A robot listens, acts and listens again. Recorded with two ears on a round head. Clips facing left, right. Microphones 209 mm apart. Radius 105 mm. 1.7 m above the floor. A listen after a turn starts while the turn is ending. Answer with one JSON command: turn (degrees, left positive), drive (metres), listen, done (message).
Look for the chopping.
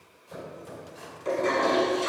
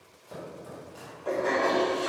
{"turn": -70}
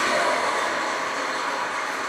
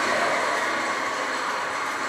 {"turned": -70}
{"listen": true}
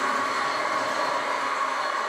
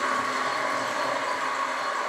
{"listen": true}
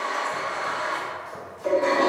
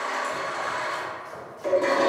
{"turn": -35}
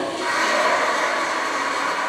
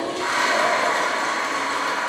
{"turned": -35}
{"listen": true}
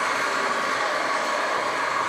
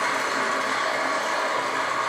{"listen": true}
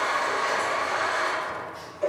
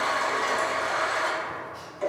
{"done": "Facing where the chopping came from. I can't hear it now."}